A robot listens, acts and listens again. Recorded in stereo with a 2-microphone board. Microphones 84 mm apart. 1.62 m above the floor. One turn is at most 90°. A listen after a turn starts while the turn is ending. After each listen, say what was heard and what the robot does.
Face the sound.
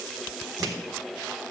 The clunk: about 50° right or 130° right. Turn 50° right.
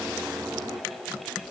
Keep listening.
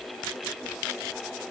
I heard a clunk, but can't make it out now. It was about straight ahead or 80° right.